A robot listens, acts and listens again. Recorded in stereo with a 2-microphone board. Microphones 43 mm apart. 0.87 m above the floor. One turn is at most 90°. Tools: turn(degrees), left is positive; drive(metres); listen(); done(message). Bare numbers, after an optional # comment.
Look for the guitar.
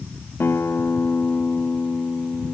# The guitar: about 70° left or 110° left.
turn(70)
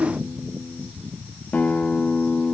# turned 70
# So it is at 40° left.
turn(40)
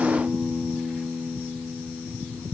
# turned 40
# The guitar is now 25° left.
turn(25)
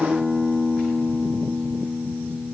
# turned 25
# The guitar is now 10° right.
turn(-10)
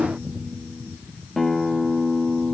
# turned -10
done("Found it: a guitar, straight ahead, under 1 m away.")